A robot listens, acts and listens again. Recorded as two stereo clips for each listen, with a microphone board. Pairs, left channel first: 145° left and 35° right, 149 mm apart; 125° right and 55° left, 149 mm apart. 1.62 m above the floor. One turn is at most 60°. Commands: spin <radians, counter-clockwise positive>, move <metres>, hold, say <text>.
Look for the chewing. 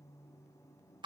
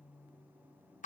hold
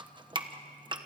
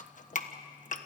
hold
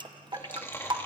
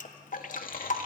spin -1.05
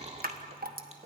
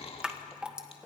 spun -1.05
spin -1.05
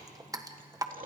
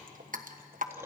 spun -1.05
spin -0.26
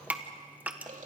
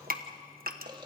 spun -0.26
say Found it: chewing, straight ahead.